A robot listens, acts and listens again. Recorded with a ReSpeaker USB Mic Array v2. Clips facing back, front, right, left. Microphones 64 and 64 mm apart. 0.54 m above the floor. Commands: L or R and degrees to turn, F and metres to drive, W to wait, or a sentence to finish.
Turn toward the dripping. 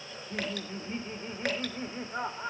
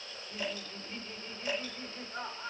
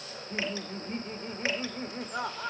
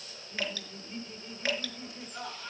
R160
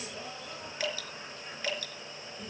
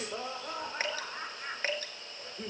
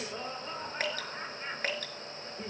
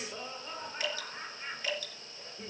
R50
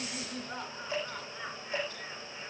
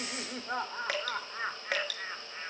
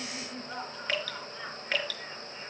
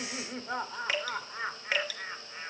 L10
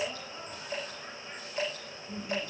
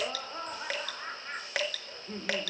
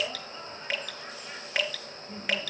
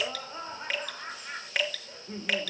Found it: dripping, straight ahead.